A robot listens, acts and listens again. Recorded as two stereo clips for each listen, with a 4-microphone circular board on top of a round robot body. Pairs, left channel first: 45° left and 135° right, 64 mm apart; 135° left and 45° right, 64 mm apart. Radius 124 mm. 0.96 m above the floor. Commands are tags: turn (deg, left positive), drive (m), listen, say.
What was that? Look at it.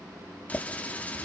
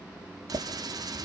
<turn deg="-25"/>
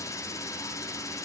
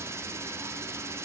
<say>Found it: a running tap, straight ahead.</say>